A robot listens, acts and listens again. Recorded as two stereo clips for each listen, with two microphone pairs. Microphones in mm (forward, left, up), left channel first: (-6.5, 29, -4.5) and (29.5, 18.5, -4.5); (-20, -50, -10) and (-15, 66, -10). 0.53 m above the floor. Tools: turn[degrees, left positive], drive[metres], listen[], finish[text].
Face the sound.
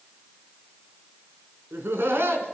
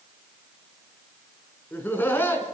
Thought: The laughter: 20° right.
Action: turn[-20]
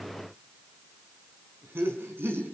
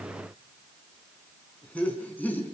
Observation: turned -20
Thought: The laughter is now 15° right.
Action: turn[-15]
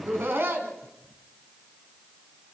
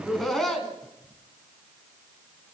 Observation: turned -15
Action: finish[Found it: laughter, straight ahead, 2 to 4 m away.]